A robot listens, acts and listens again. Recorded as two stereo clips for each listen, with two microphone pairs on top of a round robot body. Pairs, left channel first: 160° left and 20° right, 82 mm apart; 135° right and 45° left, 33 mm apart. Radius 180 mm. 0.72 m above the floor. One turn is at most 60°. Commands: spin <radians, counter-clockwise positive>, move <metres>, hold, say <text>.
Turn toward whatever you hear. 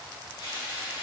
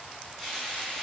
spin 1.05
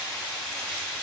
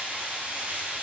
spin 1.05
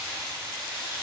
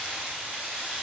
spin 0.79
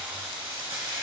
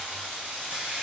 say Found it: frying, straight ahead, 2 to 4 m away.